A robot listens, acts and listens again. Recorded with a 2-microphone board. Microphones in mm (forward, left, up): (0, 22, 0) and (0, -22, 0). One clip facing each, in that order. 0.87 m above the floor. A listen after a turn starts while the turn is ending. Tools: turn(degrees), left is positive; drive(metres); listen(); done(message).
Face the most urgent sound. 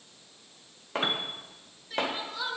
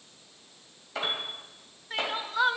turn(degrees=-40)
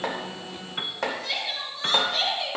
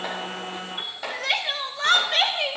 turn(degrees=-95)
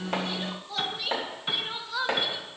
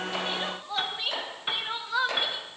turn(degrees=-35)
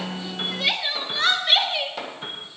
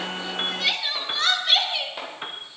turn(degrees=10)
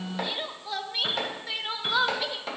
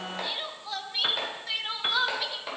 done("Found it: crying, straight ahead.")